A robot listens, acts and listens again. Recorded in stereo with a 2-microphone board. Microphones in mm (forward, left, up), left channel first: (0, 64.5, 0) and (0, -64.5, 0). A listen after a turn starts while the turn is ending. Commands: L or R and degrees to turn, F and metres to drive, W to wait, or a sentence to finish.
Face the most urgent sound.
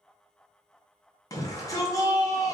L25
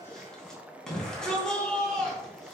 Facing the shout, 2 to 4 m away.